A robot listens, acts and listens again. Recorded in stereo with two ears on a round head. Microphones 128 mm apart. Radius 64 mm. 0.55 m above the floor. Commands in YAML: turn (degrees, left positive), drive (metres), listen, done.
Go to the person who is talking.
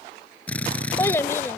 turn: 20
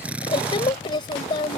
turn: 140
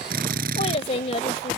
turn: 50
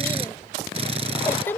turn: 15
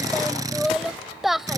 drive: 1.0
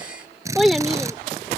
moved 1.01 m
drive: 1.0
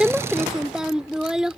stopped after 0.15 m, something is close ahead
done: "I am next to the child speaking."